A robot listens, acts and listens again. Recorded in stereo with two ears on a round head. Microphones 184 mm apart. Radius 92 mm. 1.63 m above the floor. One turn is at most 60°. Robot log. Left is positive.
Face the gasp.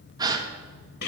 note: The gasp: about 20° right or 160° right.
cmd yaw -20
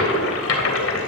cmd idle
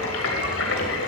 end: I heard a gasp, but can't make it out now. It was about straight ahead or 140° right.